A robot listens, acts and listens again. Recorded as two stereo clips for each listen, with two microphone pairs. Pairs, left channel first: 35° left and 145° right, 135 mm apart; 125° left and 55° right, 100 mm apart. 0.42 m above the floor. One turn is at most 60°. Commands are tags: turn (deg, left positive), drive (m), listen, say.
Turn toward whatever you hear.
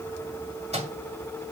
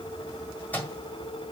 <turn deg="-60"/>
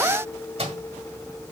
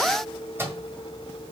<turn deg="-60"/>
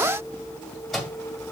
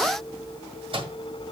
<turn deg="-50"/>
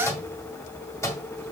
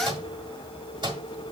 <turn deg="-30"/>
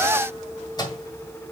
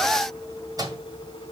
<turn deg="-15"/>
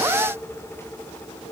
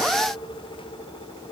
<listen/>
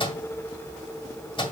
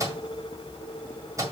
<say>Facing the microwave, 1 to 2 m away.</say>